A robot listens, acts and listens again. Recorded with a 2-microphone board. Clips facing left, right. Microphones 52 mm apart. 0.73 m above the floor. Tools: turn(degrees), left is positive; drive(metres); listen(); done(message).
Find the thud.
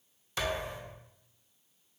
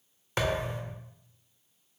turn(degrees=-50)
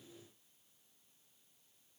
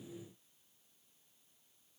listen()
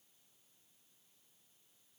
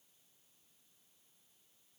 done("I heard a thud, but can't make it out now. It was about straight ahead or 80° right.")